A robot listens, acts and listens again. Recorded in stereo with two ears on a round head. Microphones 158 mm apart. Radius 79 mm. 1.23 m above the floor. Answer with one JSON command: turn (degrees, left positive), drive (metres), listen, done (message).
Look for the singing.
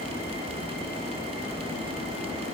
{"listen": true}
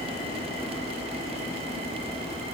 {"listen": true}
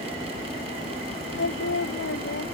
{"turn": 90}
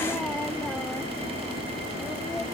{"listen": true}
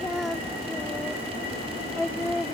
{"done": "Found it: singing, straight ahead."}